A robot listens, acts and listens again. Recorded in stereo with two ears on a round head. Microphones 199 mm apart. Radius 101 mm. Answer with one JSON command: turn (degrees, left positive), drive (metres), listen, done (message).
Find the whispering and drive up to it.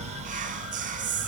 {"turn": -35}
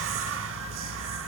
{"listen": true}
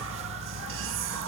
{"listen": true}
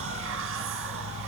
{"done": "I heard whispering, but can't make it out now. It was about straight ahead or 110° right. I did not reach it."}